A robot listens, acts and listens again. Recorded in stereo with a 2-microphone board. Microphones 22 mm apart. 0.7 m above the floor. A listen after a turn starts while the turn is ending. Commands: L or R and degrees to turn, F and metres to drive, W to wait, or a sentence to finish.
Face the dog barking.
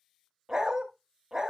R20
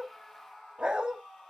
R140
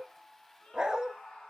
R40
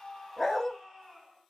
L10
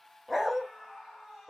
Found it: a dog barking, straight ahead.